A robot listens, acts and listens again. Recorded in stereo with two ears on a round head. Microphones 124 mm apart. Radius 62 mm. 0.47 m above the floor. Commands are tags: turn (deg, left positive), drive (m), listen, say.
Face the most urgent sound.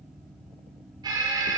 <turn deg="-30"/>
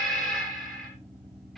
<say>Found it: an alarm, straight ahead.</say>